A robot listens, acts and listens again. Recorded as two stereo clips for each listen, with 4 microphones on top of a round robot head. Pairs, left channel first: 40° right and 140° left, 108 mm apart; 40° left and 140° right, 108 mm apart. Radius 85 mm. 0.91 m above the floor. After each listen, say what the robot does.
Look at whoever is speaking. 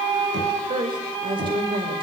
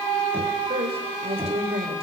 Turn 175° right.
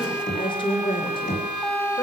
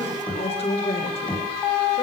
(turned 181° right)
Facing the woman speaking, 2 to 4 m away.